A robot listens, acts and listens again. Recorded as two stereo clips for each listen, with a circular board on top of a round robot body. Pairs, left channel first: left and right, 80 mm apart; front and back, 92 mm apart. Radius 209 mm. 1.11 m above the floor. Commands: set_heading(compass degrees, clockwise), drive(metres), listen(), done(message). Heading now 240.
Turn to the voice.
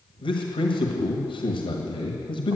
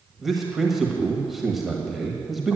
set_heading(150)
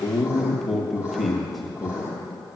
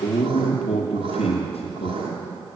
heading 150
done("Found it: a man speaking, straight ahead, 1 to 2 m away.")